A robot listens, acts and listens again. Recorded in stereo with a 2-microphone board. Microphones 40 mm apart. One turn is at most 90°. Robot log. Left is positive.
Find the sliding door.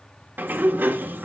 note: The sliding door: about 50° right or 130° right.
cmd yaw -50
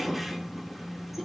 end: Facing the sliding door, 1 to 2 m away.